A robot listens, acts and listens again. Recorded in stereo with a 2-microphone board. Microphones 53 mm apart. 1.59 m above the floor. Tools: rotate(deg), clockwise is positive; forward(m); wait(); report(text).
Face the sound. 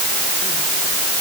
wait()
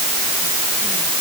wait()
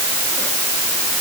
report("I can't make out anything to turn to.")